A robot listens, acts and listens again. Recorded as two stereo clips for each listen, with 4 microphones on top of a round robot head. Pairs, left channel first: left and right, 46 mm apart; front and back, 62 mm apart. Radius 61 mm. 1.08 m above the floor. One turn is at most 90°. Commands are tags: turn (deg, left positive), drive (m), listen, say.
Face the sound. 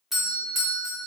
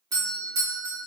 <turn deg="-90"/>
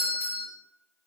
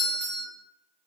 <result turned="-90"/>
<turn deg="-60"/>
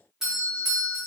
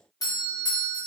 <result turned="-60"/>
<turn deg="-10"/>
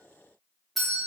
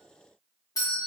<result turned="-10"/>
<say>Facing the doorbell, 1 to 2 m away.</say>